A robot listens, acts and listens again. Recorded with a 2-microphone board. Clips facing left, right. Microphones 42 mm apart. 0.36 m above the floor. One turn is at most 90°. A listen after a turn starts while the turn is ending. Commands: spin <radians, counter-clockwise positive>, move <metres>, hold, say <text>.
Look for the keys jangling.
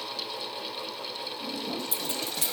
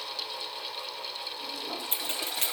spin -0.61
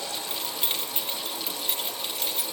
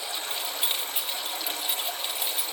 say Facing the keys jangling.